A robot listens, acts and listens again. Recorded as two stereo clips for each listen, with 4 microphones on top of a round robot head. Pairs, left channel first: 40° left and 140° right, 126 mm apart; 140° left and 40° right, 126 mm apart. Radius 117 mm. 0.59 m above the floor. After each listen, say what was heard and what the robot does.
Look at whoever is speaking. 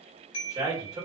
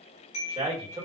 The man speaking: 80° right. Turn 80° right.
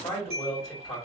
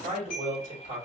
The man speaking is now 20° right. Turn 20° right.
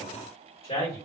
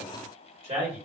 Facing the man speaking.